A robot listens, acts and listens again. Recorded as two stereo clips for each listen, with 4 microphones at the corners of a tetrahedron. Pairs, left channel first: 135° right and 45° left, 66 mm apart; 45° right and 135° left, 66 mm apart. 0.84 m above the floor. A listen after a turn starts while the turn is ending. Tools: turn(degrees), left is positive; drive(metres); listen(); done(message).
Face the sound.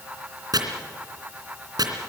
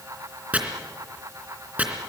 turn(degrees=65)
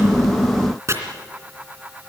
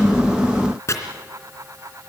done("Found it: chopping, straight ahead.")